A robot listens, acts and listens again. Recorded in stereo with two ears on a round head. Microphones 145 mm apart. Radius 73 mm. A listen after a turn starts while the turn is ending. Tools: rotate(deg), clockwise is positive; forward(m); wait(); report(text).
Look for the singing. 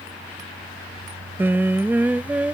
rotate(30)
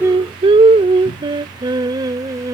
rotate(155)
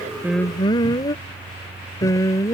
rotate(-20)
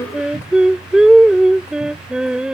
report("Facing the singing.")